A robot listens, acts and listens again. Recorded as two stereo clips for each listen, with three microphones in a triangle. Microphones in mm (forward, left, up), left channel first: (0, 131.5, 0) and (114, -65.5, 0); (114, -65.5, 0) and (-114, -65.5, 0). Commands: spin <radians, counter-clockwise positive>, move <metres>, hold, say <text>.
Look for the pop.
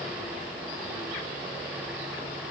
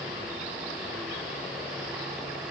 hold
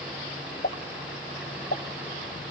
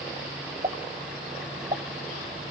spin 2.27
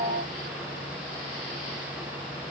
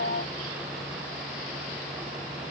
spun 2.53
spin -0.26
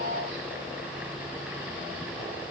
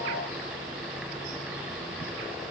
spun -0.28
say Facing where the pop came from. I can't hear it now.